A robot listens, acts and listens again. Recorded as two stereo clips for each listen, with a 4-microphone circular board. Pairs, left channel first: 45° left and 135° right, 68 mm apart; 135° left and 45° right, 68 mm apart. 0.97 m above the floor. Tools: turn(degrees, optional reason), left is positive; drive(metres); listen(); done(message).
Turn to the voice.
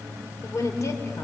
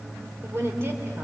done("Facing the woman speaking, 2 to 4 m away.")